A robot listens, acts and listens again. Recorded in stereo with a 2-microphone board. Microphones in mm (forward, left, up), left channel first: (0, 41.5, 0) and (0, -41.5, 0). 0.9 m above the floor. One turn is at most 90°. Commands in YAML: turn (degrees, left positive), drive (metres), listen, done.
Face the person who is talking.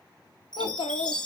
turn: 90
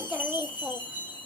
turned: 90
turn: -10
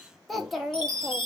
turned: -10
done: "Facing the child speaking, 1 to 2 m away."